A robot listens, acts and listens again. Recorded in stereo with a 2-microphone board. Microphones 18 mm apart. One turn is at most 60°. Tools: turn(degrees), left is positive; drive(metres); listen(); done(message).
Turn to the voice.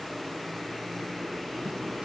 listen()
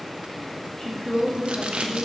turn(degrees=20)
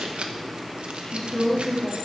turn(degrees=60)
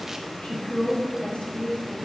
turn(degrees=60)
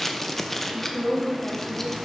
turn(degrees=50)
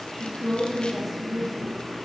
done("Found it: a woman speaking, straight ahead, 2 to 4 m away.")